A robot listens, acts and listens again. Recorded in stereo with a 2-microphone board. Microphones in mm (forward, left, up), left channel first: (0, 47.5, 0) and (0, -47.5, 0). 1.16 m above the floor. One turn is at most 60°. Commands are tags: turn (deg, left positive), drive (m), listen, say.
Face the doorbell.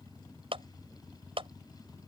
<listen/>
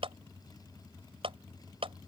<listen/>
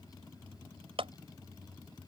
<say>I can't make out a doorbell to turn to.</say>